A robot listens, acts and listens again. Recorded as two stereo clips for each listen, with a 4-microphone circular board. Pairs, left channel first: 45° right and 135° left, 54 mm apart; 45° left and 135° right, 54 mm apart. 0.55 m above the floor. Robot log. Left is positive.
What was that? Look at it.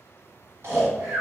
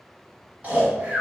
note: The snoring: 165° left.
cmd yaw +165
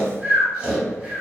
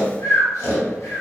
note: The snoring is now 70° left.
cmd yaw +70
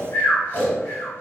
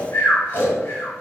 end: Facing the snoring.